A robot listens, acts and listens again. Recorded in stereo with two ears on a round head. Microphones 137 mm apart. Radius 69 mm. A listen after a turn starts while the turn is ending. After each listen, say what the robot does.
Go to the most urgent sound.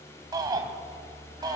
Turn 30° right.
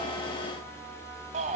Turn 120° right.
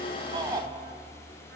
Turn 25° right.
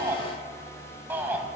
Turn 15° right.
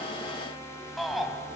Drive 1.0 m forward.
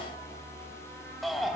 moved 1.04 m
Drive 1.0 m forward.
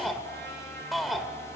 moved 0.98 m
Drive 1.0 m forward.
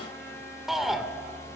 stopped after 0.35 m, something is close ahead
I am next to the shout.